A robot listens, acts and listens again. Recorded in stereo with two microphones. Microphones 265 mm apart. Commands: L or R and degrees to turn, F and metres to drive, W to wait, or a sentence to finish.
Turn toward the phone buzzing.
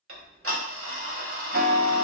W
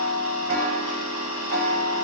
W
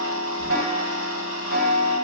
I can't make out a phone buzzing, only ticking.